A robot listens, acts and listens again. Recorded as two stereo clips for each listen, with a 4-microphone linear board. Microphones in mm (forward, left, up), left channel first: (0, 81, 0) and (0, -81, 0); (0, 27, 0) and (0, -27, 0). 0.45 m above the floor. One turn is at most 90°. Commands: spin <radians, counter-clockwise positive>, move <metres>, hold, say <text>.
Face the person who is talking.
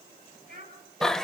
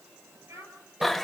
spin -1.22
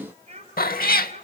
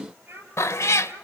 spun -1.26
spin -0.70
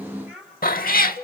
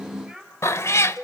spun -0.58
say Facing the child speaking.